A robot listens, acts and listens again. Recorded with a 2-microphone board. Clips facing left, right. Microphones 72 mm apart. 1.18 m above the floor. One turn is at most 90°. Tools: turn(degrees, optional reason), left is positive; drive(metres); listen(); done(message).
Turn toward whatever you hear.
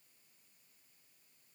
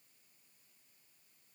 listen()
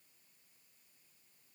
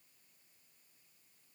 listen()
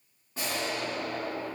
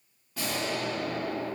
turn(degrees=35, reason="The explosion: about 35° left or 145° left.")
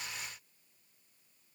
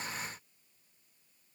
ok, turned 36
listen()
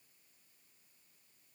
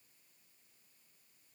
done("I heard an explosion, but can't make it out now. It was about straight ahead or 110° left.")